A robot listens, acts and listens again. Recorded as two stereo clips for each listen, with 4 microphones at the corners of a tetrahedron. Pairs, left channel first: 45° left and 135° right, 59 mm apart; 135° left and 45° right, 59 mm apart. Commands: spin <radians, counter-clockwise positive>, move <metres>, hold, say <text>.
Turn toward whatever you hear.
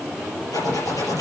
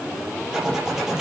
spin 0.61
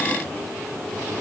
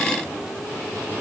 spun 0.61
hold
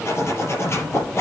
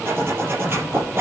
say Found it: a zipper, straight ahead, over 4 m away.